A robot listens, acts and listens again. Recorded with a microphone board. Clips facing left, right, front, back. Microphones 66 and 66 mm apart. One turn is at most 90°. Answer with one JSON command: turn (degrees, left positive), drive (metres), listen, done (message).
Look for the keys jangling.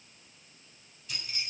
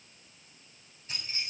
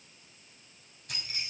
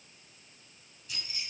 {"turn": -35}
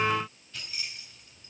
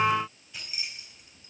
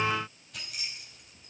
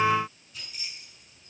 {"turn": -15}
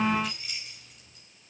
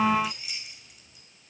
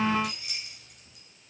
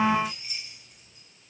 {"turn": -10}
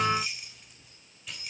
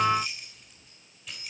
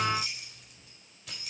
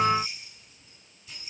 {"done": "Found it: keys jangling, straight ahead, 2 to 4 m away."}